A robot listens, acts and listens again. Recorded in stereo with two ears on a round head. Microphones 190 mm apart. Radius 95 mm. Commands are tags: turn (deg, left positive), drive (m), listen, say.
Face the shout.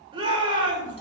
<turn deg="-25"/>
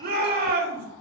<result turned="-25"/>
<turn deg="-130"/>
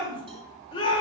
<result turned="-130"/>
<turn deg="25"/>
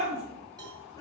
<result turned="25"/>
<turn deg="20"/>
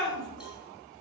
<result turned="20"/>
<say>Found it: a shout, straight ahead.</say>